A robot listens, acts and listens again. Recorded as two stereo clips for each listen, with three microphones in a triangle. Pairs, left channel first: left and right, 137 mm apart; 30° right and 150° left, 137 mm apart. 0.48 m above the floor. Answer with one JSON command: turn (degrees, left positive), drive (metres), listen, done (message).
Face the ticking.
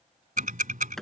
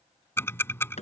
{"turn": -105}
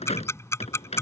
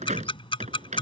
{"turn": 20}
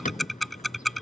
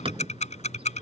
{"done": "Found it: ticking, straight ahead."}